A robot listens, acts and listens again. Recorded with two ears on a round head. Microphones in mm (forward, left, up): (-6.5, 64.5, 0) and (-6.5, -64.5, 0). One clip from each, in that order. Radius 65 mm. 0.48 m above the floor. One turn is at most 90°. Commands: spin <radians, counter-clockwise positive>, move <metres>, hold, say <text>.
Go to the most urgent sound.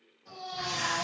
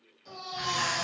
spin -1.57
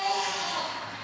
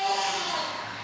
spin -0.17
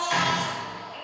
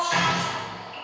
move 1.0
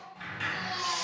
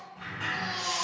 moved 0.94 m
move 1.0
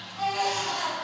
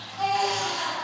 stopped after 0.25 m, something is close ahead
say Arrived at the baby crying, straight ahead.